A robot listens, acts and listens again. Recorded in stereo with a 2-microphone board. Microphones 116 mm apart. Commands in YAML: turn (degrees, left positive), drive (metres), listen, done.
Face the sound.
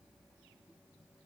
listen: true
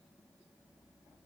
listen: true
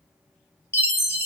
turn: 25
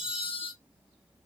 turn: 130
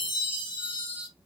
turn: 50
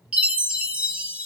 turn: -10
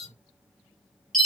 done: "Found it: a chime, straight ahead."